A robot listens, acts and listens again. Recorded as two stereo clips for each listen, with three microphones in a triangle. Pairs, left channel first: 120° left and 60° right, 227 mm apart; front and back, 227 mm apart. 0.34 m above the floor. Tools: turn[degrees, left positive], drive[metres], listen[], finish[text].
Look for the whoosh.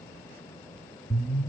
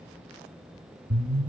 Thought: The whoosh: 165° right.
Action: turn[-165]
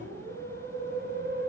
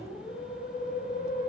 Thought: The whoosh is now 40° right.
Action: turn[-40]
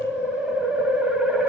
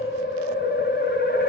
Thought: The whoosh is now 25° left.
Action: turn[25]
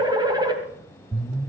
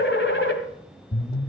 Thought: The whoosh is now 10° left.
Action: turn[10]
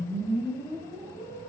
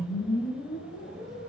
Action: finish[Found it: a whoosh, straight ahead.]